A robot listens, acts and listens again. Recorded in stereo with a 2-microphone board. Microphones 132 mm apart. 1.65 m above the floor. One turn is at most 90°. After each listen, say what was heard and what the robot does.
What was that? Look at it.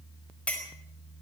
Turn 30° left.
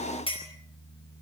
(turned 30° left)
Keep listening.
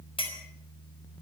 So it is at 140° left. Turn 90° left.
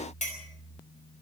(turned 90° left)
The clink is now 65° left. Turn 65° left.
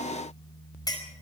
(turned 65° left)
The clink is now 30° left. Turn 30° left.
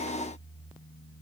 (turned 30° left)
Keep listening.
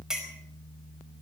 Facing the clink, over 4 m away.